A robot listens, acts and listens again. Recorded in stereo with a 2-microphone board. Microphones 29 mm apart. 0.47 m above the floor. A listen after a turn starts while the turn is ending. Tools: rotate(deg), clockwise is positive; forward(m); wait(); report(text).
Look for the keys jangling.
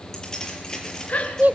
rotate(-25)
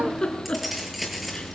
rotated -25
report("Facing the keys jangling.")